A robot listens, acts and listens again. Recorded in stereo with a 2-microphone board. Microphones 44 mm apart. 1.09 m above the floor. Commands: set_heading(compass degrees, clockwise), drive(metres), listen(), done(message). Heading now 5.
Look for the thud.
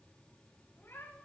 listen()
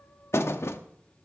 set_heading(300)
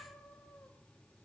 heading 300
listen()
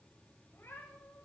done("I heard a thud, but can't make it out now. It was about straight ahead or 50° left.")